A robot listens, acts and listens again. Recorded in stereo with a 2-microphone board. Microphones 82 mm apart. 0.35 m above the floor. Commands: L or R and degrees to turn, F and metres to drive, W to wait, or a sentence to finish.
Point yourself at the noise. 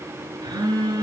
R65
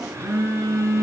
R45
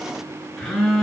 Found it: a phone buzzing, straight ahead, 1 to 2 m away.